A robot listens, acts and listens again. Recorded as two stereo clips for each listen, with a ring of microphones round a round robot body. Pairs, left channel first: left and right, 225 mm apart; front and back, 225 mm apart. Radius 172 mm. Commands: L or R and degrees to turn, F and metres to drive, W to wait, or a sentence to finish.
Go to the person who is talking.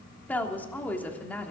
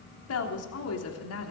F1.0
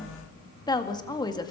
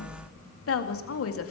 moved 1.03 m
L15
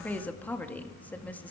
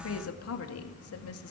F1.0
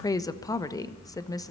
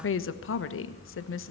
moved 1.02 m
L15
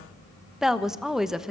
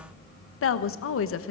F1.0
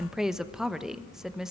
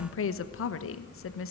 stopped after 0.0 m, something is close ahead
Arrived at the woman speaking, straight ahead.